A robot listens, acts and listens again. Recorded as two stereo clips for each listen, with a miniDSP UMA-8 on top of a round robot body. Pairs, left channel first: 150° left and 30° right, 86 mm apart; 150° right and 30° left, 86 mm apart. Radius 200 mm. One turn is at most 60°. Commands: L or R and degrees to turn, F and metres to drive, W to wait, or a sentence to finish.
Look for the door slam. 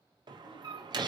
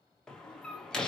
R60
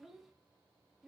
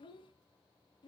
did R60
I heard a door slam from this way, but can't make it out now.